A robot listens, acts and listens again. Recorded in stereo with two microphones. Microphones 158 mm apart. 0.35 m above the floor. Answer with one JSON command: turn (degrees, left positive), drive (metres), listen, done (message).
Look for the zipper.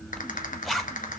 {"turn": 30}
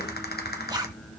{"turn": -30}
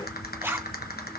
{"turn": -20}
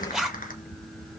{"done": "Found it: a zipper, straight ahead."}